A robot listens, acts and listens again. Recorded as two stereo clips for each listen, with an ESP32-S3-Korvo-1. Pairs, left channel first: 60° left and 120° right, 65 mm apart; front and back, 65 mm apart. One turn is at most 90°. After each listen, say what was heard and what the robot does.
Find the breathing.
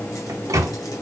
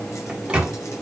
Keep listening.
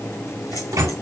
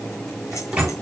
Keep listening.
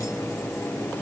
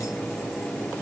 I can't make out breathing, only a microwave.